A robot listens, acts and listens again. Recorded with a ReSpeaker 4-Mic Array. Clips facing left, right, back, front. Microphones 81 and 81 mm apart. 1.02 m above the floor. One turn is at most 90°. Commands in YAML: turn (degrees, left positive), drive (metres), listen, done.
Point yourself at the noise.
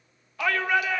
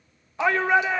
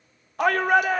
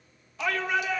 turn: -90
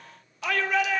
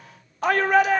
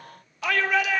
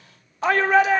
turn: -50
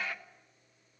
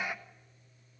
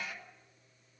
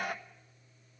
turn: -20
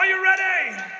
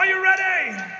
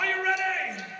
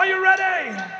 done: "Found it: a shout, straight ahead, 1 to 2 m away."